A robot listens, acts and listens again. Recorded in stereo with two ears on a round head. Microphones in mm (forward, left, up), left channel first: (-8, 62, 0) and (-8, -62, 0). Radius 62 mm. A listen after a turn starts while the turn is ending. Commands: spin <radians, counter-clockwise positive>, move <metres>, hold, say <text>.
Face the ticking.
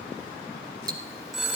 spin -0.52
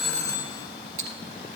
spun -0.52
spin -2.01
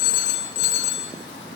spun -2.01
hold
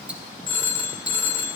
hold
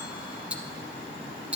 spin -0.17
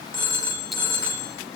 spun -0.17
hold
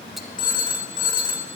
hold
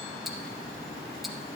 say I heard ticking from this way, but can't make it out now.